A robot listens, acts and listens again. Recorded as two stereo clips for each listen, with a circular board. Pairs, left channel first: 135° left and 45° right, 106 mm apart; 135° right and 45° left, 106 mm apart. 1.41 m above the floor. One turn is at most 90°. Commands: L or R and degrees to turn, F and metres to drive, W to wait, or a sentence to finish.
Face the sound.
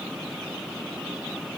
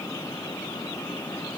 W
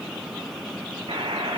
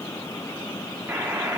R20
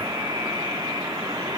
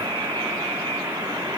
Facing the buzzer.